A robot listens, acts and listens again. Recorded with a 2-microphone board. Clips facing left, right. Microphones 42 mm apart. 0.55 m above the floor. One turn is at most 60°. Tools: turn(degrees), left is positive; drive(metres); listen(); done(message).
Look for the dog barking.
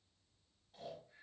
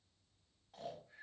listen()
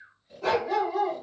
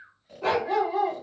turn(degrees=-25)
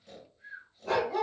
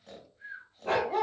turn(degrees=-60)
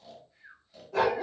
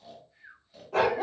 turn(degrees=-60)
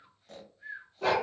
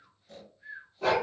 done("Facing the dog barking, under 1 m away.")